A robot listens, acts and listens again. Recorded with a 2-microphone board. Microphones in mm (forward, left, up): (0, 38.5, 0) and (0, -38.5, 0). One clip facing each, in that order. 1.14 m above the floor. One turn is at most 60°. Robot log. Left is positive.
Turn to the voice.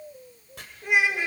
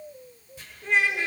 cmd yaw +30
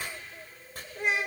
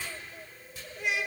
note: So it is at 140° left.
cmd yaw +60
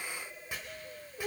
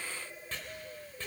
note: The child speaking is now 95° left.
cmd yaw +60
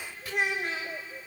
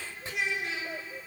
note: The child speaking is now 50° left.
cmd yaw +50
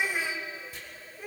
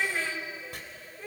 note: The child speaking is now 10° left.
cmd yaw +10
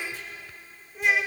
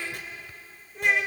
end: Facing the child speaking, 2 to 4 m away.